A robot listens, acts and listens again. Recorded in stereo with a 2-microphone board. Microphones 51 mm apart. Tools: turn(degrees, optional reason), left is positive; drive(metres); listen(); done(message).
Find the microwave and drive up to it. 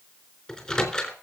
turn(degrees=20, reason="The microwave: about 20° left or 160° left.")
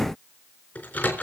turn(degrees=140, reason="So it is at 140° left.")
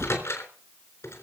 turn(degrees=60, reason="The microwave is now 60° left.")
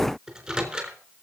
turn(degrees=-20, reason="The microwave is now 20° right.")
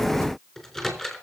drive(metres=1.0)
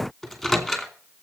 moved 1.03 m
drive(metres=1.0)
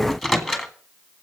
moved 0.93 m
drive(metres=1.0)
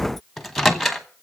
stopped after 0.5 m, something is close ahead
done("Arrived at the microwave, straight ahead.")